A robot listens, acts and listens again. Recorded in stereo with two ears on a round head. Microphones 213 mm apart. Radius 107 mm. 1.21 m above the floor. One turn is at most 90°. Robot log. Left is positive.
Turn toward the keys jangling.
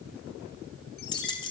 note: The keys jangling: about 20° left or 160° left.
cmd yaw +20
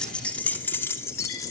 note: The keys jangling: about 15° left or 165° left.
cmd yaw +15
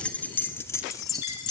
note: The keys jangling: about 20° left or 160° left.
cmd yaw +20
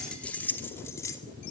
cmd yaw +30
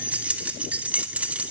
end: Facing the keys jangling, 2 to 4 m away.